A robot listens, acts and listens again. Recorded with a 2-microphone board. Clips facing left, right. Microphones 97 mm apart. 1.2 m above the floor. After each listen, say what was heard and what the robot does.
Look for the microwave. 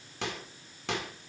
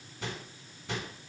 Turn 90° left.
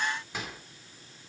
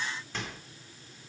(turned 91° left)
So it is at 10° left. Turn 10° left.
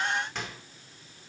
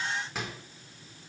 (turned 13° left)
Found it: a microwave, straight ahead.